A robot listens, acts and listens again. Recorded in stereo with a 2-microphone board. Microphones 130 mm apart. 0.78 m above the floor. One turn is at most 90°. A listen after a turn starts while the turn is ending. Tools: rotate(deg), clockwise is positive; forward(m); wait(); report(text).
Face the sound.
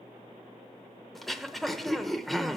rotate(-30)
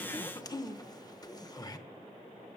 rotate(-90)
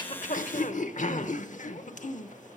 rotate(-75)
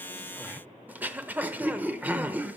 rotate(15)
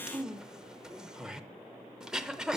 report("Found it: throat clearing, straight ahead, under 1 m away.")